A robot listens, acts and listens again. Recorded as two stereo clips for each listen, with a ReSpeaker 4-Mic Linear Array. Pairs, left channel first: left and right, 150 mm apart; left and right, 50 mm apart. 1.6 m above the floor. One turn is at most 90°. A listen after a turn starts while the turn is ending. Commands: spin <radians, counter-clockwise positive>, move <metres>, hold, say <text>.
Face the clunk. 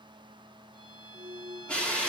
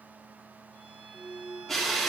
spin -1.13
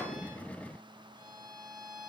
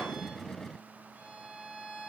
hold
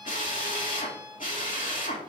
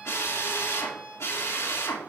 say I heard a clunk, but can't make it out now. It was about straight ahead or 50° right.